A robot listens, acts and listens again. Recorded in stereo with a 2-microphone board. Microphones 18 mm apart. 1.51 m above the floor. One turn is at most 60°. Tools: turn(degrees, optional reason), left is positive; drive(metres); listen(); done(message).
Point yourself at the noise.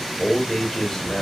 turn(degrees=25, reason="The man speaking: about 25° left or 155° left.")
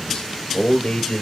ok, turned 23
turn(degrees=60, reason="So it is at 120° left.")
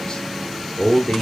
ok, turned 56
turn(degrees=40, reason="The man speaking is now 40° left.")
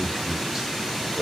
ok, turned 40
turn(degrees=-35, reason="The man speaking is now 35° right.")
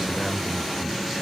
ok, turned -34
turn(degrees=-10, reason="The man speaking is now 10° right.")
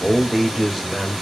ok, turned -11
done("Found it: a man speaking, straight ahead.")